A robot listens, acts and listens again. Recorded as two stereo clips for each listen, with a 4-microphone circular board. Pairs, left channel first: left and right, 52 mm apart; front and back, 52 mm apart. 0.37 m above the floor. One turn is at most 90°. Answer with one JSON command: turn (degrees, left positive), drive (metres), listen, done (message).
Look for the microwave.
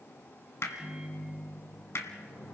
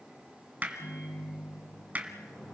{"turn": -15}
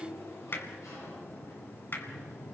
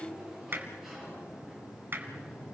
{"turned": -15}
{"listen": true}
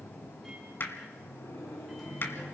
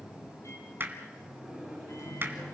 {"done": "Facing the microwave."}